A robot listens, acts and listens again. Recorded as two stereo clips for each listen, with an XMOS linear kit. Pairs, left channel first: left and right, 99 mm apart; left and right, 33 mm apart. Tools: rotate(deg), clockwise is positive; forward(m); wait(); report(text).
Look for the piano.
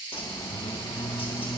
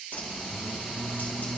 wait()
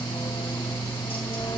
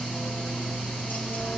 wait()
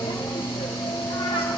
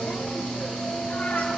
report("I can't make out a piano to turn to.")